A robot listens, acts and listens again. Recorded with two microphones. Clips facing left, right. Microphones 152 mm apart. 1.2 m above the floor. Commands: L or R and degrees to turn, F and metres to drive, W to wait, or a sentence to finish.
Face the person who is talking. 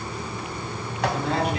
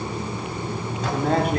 R50
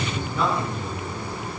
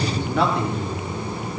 R75
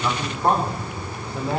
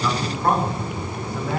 L25
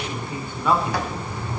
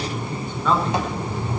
L10
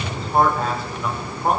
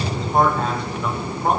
Found it: a man speaking, straight ahead.